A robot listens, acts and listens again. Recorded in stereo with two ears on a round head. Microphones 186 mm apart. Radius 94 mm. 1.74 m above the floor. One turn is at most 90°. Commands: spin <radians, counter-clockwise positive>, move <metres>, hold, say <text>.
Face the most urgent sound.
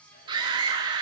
spin -0.35
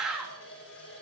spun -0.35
say Found it: a scream, straight ahead, 2 to 4 m away.